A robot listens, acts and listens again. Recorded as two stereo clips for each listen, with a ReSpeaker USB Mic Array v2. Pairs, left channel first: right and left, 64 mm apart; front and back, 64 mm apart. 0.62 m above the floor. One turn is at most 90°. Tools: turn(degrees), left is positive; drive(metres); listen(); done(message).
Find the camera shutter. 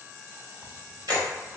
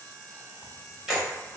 turn(degrees=90)
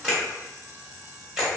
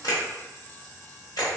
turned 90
turn(degrees=10)
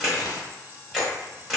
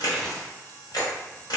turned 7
done("Facing the camera shutter.")